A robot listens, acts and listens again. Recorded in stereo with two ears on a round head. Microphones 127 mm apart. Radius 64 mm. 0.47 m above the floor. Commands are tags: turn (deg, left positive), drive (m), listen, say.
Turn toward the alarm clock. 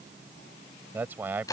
<listen/>
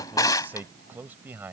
<listen/>
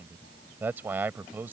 <say>I can't make out an alarm clock, only a man speaking and a drawer.</say>